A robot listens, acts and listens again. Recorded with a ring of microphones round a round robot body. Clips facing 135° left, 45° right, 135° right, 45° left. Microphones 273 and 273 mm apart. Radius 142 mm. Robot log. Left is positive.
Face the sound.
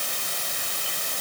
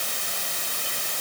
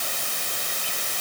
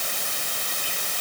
cmd idle
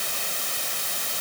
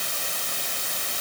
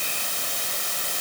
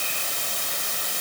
cmd idle
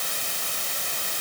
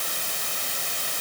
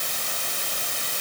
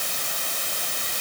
end: I can't make out anything.